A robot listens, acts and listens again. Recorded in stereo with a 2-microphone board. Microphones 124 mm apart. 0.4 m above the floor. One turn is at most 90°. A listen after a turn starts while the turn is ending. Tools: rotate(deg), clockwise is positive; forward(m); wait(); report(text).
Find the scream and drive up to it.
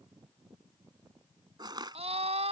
rotate(60)
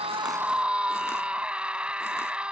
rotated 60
rotate(10)
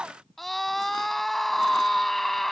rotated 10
forward(1.0)
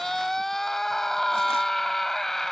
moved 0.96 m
forward(1.0)
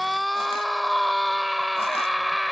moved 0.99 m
forward(1.0)
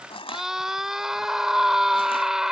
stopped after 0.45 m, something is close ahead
report("I am next to the scream.")